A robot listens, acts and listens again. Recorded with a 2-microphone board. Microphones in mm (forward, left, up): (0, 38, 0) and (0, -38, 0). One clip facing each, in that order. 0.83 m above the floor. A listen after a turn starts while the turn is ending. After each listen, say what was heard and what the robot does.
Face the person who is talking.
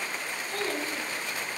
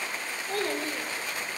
The child speaking: about 60° right or 120° right. Turn 60° right.
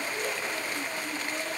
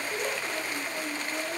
Found it: a child speaking, straight ahead, 2 to 4 m away.